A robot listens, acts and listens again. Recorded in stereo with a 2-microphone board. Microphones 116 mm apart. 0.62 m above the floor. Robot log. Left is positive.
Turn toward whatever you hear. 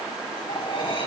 note: The cutlery clinking: about 45° left or 135° left.
cmd yaw +45
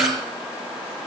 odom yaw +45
cmd idle
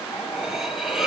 end: Found it: cutlery clinking, straight ahead.